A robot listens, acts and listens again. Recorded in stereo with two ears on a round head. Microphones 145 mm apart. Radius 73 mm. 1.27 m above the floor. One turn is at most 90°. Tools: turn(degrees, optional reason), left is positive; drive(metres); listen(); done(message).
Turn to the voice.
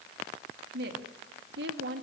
turn(degrees=-75, reason="The woman speaking: about 75° right or 105° right.")
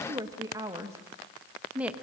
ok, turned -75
done("Found it: a woman speaking, straight ahead, 1 to 2 m away.")